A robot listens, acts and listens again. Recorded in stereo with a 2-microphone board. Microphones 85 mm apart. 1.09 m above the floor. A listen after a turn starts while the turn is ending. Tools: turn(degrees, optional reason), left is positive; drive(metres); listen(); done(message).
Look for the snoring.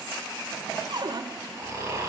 turn(degrees=-35, reason="The snoring: about 35° right or 145° right.")
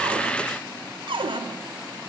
listen()
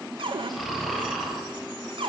done("Facing the snoring, over 4 m away.")